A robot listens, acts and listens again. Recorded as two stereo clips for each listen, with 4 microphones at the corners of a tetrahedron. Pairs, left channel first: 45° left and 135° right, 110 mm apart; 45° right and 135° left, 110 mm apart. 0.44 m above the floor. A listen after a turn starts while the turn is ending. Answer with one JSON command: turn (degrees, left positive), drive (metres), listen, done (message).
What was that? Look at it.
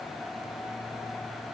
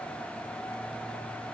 {"listen": true}
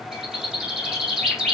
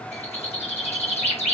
{"turn": -50}
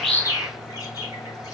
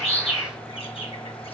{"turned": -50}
{"turn": -15}
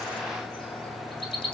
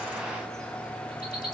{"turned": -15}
{"done": "Facing the bird."}